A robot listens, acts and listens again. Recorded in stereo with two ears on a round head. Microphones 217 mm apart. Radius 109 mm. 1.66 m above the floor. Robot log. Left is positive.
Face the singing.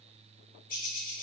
cmd idle
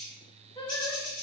note: The singing: about 20° left or 160° left.
cmd yaw +20
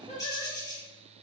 note: The singing: about 25° left or 155° left.
cmd yaw +25
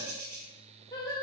cmd yaw +30
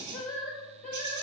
note: The singing: about 25° left or 155° left.
cmd yaw +25
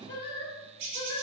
note: So it is at 135° left.
cmd yaw +135
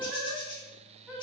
end: Found it: singing, straight ahead.